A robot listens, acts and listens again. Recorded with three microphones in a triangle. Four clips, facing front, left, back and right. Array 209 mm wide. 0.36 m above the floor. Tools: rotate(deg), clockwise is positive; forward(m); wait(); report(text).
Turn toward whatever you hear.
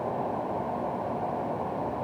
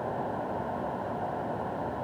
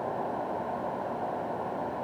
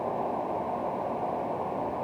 wait()
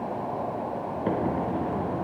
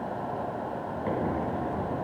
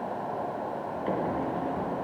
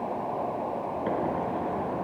wait()
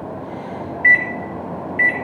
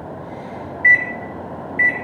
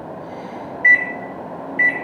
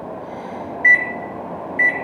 rotate(25)
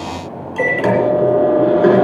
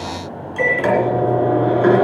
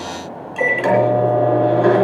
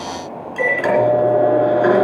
report("Found it: a microwave, straight ahead.")